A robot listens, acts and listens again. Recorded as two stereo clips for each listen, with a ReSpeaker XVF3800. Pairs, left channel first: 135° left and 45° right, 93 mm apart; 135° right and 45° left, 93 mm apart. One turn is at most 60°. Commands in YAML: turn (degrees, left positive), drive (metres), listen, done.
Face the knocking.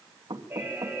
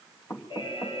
turn: -60
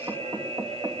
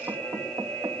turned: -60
turn: -10
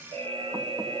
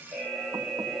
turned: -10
listen: true
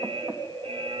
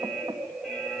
listen: true
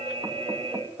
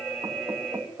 done: "Facing the knocking."